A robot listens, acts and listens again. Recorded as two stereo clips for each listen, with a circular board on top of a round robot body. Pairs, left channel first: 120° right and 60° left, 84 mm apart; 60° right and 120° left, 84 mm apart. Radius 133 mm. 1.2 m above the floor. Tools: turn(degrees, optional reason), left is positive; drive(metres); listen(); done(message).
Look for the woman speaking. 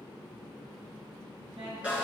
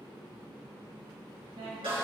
turn(degrees=90, reason="The woman speaking: 90° left.")
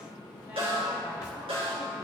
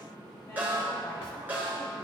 listen()
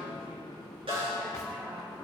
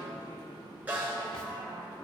listen()
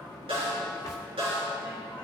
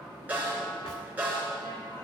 done("I heard a woman speaking from this way, but can't make it out now.")